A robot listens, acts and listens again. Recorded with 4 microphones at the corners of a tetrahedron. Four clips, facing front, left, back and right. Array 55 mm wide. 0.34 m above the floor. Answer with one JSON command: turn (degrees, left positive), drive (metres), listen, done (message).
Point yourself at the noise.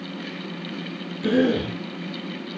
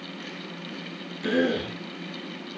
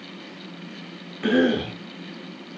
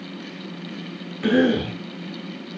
{"turn": -135}
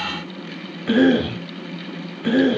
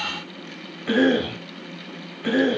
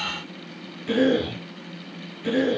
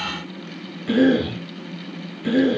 {"turn": 35}
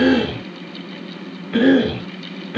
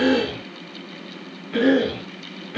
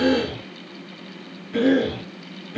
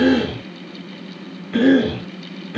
{"turn": -10}
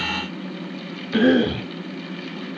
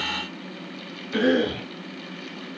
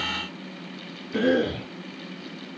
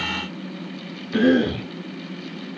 {"done": "Facing the cough."}